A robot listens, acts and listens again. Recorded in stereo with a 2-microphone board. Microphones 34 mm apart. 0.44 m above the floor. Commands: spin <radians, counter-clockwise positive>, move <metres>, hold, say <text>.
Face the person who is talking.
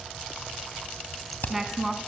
spin -0.52
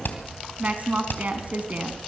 spin -2.44
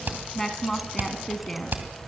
spin 0.17
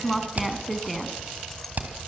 say Facing the woman speaking, 2 to 4 m away.